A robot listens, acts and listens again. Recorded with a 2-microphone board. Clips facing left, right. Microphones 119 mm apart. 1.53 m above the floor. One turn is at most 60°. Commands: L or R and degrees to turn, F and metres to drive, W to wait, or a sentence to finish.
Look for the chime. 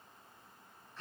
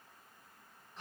W
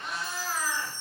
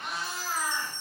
L30
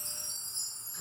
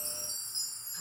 R25
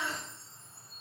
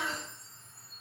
Found it: a chime, straight ahead.